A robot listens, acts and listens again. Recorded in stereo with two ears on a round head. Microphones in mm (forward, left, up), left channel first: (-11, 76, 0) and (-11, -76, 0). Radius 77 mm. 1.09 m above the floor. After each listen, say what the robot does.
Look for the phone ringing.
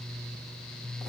Keep listening.
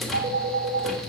Turn 90° right.
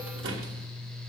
Keep listening.
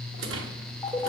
Turn 15° left.
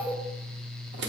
Facing the phone ringing, 2 to 4 m away.